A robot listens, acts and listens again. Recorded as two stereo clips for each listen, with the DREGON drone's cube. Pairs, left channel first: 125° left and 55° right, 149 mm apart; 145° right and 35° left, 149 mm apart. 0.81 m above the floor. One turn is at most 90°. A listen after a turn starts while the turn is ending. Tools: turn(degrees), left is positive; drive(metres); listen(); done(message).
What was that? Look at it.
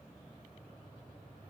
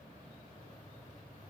listen()
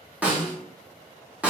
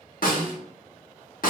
turn(degrees=-90)
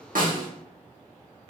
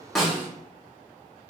turn(degrees=-35)
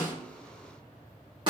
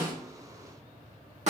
done("Facing the snare drum.")